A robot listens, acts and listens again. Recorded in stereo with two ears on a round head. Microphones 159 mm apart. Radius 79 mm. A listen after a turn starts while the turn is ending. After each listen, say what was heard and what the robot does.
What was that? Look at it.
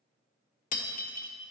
The breaking glass: about 50° left or 130° left. Turn 50° left.
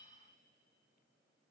Keep listening.
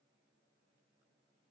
I heard breaking glass, but can't make it out now. It was about straight ahead or 80° left.